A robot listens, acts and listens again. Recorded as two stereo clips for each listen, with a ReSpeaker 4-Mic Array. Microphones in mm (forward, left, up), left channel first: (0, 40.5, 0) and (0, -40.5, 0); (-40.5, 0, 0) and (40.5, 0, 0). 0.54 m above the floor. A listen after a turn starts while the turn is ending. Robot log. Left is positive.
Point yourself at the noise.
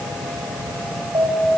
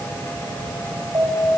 note: The alarm: 50° right.
cmd yaw -50
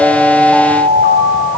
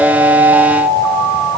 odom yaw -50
end: Found it: an alarm, straight ahead, over 4 m away.